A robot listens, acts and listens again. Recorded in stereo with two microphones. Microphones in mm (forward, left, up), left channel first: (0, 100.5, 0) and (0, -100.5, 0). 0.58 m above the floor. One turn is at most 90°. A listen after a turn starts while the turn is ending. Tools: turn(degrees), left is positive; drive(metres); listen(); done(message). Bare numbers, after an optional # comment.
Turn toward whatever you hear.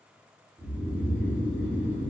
# The snoring: about 40° right or 140° right.
turn(-40)
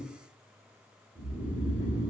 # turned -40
# So it is at 100° right.
turn(-90)
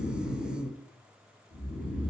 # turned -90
# The snoring is now 25° right.
turn(-25)
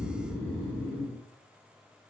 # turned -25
# The snoring is now 10° left.
turn(10)
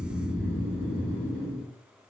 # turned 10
done("Facing the snoring.")